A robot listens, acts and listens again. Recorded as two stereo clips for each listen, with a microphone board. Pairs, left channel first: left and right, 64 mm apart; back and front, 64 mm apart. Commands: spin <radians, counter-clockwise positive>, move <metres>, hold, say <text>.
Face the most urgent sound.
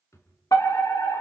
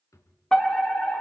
spin 1.75
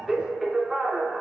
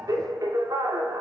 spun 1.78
say Facing the fire alarm, 2 to 4 m away.